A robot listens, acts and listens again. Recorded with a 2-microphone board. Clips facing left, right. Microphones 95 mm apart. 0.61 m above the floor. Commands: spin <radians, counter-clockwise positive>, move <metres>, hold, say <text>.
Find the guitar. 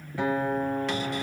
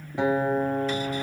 spin -0.35
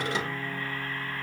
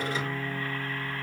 say Facing the guitar.